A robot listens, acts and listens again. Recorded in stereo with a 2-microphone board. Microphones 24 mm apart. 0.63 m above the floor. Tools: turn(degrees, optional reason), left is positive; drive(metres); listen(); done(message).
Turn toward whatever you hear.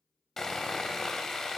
turn(degrees=30)
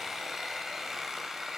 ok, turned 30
turn(degrees=-15, reason="So it is at 15° right.")
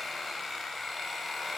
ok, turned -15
done("Facing the sawing, under 1 m away.")